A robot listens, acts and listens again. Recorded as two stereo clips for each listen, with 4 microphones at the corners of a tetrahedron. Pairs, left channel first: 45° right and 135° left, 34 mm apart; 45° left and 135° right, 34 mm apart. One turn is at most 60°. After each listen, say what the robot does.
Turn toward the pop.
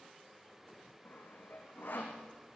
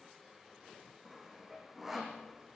Keep listening.
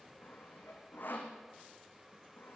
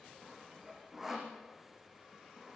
Keep listening.
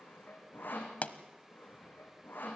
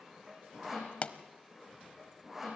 Found it: a pop, straight ahead, 1 to 2 m away.